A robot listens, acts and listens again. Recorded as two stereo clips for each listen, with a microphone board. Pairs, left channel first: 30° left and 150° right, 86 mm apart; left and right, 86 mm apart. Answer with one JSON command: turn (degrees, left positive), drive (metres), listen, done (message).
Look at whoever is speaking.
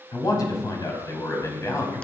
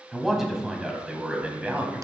{"turn": -20}
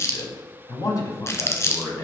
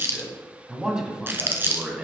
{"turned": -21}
{"turn": -20}
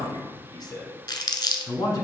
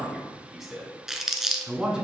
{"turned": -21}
{"turn": -10}
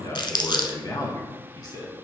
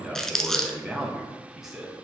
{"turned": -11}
{"done": "Facing the man speaking."}